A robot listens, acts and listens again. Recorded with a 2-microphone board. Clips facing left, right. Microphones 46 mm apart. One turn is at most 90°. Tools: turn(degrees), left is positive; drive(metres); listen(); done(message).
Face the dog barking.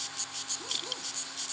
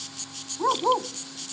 turn(degrees=-90)
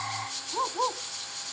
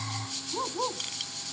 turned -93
turn(degrees=20)
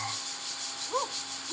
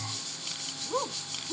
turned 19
turn(degrees=10)
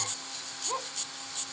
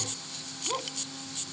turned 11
done("Facing the dog barking.")